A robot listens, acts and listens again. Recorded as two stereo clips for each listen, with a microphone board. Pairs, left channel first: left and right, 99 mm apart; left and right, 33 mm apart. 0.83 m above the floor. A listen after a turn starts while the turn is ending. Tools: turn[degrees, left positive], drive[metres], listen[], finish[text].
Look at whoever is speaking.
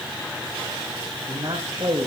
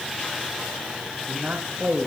Thought: The man speaking: about 50° right or 130° right.
Action: turn[-50]
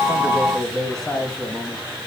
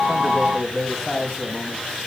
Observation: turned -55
Action: finish[Found it: a man speaking, straight ahead.]